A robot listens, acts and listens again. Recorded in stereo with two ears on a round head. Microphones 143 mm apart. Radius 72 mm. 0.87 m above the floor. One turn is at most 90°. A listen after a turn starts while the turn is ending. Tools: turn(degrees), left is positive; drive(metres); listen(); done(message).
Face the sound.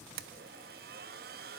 turn(degrees=-65)
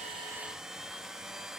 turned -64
done("Found it: a blender, straight ahead, under 1 m away.")